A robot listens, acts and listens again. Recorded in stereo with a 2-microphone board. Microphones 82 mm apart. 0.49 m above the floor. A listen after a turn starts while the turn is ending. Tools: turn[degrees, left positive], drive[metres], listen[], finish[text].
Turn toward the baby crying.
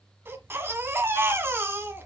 Thought: The baby crying: about 30° right or 150° right.
Action: turn[-30]
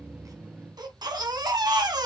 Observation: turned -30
Thought: So it is at 125° right.
Action: turn[-125]
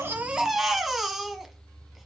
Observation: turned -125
Action: finish[Facing the baby crying.]